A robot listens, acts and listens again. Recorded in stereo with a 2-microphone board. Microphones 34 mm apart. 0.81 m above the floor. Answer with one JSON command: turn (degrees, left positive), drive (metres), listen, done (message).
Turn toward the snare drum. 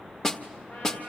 {"turn": 15}
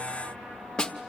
{"turn": 150}
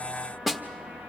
{"turn": -10}
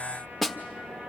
{"done": "Facing the snare drum."}